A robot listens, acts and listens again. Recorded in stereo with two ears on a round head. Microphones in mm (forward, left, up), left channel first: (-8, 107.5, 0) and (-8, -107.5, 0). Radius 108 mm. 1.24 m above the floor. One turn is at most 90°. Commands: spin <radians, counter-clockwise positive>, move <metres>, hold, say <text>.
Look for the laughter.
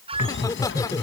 spin 0.52
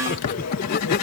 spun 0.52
spin 1.57
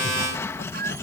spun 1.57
spin 0.79
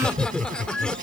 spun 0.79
say Found it: laughter, straight ahead.